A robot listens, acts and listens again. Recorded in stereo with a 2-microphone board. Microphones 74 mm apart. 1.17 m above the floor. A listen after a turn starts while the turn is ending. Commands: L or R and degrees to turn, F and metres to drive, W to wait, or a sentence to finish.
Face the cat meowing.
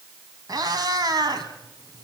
R65
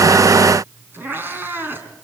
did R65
R30
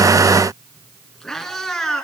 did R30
Facing the cat meowing, 2 to 4 m away.